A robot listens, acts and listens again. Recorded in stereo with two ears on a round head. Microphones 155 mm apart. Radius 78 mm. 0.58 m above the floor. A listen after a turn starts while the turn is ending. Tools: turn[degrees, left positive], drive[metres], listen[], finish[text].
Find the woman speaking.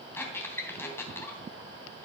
Action: listen[]
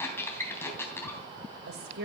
Thought: The woman speaking: about 60° right or 120° right.
Action: turn[-60]
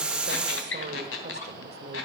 Thought: So it is at 35° right.
Action: turn[-35]
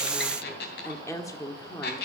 Thought: The woman speaking is now 20° left.
Action: turn[20]
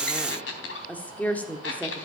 Thought: The woman speaking is now 10° left.
Action: turn[10]
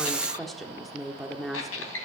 Action: finish[Facing the woman speaking, 1 to 2 m away.]